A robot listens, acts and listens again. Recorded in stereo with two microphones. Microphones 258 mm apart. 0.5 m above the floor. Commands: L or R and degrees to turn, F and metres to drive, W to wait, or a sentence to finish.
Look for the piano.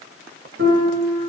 R50
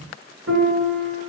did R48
R80
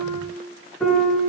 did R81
Found it: a piano, straight ahead, 1 to 2 m away.